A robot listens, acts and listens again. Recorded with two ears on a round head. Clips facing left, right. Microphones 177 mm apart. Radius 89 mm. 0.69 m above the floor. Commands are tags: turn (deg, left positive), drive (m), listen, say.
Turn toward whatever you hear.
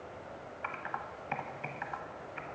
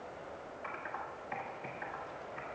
<turn deg="70"/>
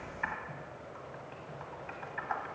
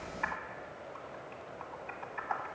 <say>Facing the typing on a keyboard.</say>